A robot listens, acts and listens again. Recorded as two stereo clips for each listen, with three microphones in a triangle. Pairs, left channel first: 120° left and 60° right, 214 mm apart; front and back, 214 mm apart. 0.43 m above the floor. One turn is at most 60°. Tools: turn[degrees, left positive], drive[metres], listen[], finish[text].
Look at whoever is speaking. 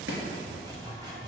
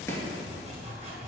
Action: listen[]
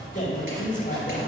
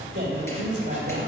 Thought: The man speaking: 160° left.
Action: turn[60]
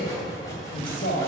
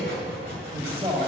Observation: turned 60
Thought: The man speaking is now 125° left.
Action: turn[60]
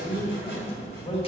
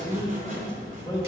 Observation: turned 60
Thought: The man speaking is now 65° left.
Action: turn[60]
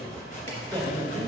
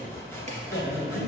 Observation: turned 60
Action: finish[Facing the man speaking.]